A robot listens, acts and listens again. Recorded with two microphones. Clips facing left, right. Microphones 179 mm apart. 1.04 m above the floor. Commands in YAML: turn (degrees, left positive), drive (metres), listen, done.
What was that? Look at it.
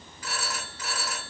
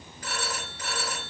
turn: -40
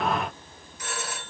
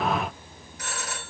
turn: -95
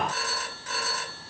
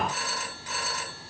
turn: -20
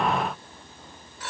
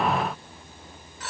done: "Found it: a phone ringing, straight ahead."